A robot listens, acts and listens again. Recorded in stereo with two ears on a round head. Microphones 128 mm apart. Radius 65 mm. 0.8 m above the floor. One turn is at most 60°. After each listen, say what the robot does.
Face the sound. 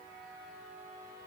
Keep listening.
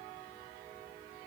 Keep listening.
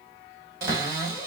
Turn 25° right.
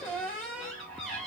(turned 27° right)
Facing the cupboard door, 2 to 4 m away.